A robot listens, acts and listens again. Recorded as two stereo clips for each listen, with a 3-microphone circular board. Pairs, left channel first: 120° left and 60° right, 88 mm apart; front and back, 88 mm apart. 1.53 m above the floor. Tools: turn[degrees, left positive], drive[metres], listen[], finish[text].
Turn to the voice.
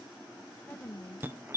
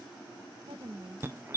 Thought: The woman speaking: 170° right.
Action: turn[-170]
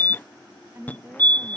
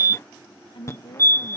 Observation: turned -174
Action: finish[Found it: a woman speaking, straight ahead.]